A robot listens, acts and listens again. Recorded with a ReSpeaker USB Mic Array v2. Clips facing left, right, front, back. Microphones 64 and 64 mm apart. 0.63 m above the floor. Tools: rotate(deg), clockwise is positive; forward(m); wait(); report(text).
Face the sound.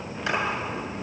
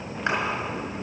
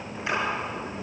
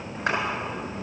rotate(145)
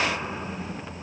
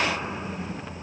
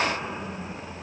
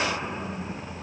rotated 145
wait()
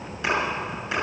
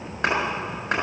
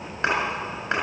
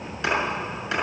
rotate(50)
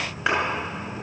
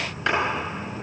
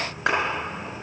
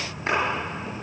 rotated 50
rotate(-15)
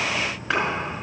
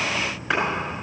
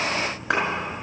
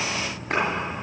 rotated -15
report("Found it: a clap, straight ahead.")